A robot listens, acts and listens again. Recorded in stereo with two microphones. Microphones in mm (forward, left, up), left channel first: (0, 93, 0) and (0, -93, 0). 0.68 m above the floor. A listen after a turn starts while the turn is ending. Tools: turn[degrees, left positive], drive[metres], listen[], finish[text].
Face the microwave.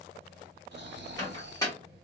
Thought: The microwave: about 20° left or 160° left.
Action: turn[20]
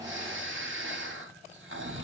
Action: listen[]
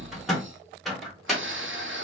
Action: finish[Found it: a microwave, straight ahead, 1 to 2 m away.]